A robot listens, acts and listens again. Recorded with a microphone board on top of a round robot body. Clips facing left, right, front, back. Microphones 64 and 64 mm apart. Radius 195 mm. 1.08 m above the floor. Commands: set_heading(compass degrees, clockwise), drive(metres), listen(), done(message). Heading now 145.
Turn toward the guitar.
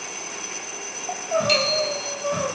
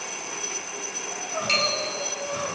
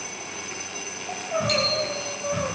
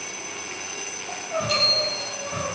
listen()
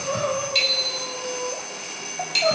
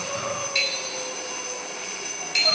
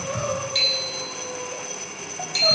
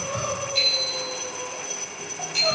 listen()
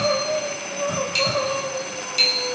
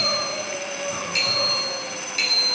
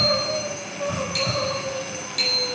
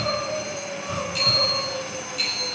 done("I can't make out a guitar, only crying and a bicycle bell.")